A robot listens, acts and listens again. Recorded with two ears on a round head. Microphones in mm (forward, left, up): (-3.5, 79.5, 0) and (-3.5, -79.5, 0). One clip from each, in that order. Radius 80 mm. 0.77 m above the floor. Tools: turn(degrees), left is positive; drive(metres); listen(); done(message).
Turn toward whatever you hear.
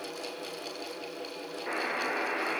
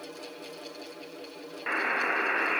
turn(degrees=-65)
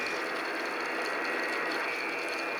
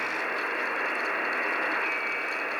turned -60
turn(degrees=-55)
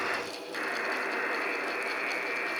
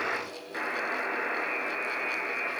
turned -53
done("Facing the buzzer, 2 to 4 m away.")